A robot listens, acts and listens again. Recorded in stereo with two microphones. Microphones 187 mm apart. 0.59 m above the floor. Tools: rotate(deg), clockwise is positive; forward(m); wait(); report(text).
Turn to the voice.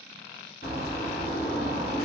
wait()
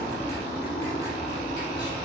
wait()
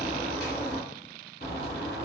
report("I can't make out anyone speaking to turn to.")